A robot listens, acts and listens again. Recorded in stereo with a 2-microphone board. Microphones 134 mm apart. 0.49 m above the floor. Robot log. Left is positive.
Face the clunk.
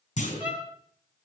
note: The clunk: about 65° left or 115° left.
cmd yaw +65
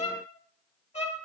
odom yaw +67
cmd idle
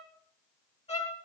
end: I heard a clunk, but can't make it out now. It was about straight ahead or 45° left.